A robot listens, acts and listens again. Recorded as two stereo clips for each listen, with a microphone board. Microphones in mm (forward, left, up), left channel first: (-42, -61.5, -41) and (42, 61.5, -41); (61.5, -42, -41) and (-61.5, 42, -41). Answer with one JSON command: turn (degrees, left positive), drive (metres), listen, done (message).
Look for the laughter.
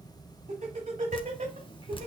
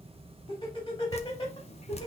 {"turn": 30}
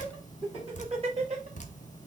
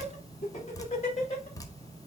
{"turn": 10}
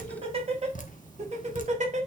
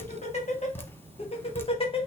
{"turn": 20}
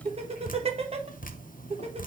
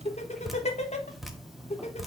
{"turn": 10}
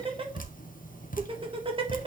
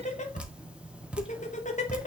{"done": "Facing the laughter, 1 to 2 m away."}